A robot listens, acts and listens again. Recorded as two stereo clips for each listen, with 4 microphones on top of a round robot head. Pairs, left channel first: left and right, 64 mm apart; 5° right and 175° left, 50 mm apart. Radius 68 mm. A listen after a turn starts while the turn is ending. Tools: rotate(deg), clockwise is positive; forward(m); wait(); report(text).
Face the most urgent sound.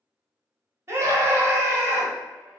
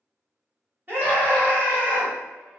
rotate(135)
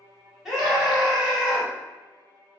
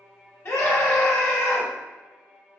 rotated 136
report("Facing the scream, 1 to 2 m away.")